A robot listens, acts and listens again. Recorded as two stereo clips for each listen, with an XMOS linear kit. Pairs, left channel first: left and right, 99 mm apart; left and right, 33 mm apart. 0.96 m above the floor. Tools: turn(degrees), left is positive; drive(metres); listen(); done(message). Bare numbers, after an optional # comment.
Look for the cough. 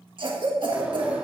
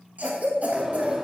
# The cough: about 55° right or 125° right.
turn(-55)
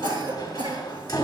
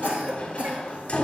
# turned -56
# So it is at 60° right.
turn(-60)
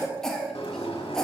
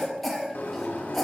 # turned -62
done("Found it: a cough, straight ahead.")